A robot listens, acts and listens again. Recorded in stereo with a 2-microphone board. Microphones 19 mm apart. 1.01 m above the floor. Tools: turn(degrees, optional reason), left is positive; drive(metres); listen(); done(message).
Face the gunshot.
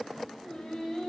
listen()
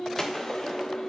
turn(degrees=30, reason="The gunshot: about 30° left or 150° left.")
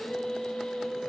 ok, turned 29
listen()
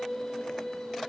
done("I heard a gunshot, but can't make it out now. It was about straight ahead or 120° left.")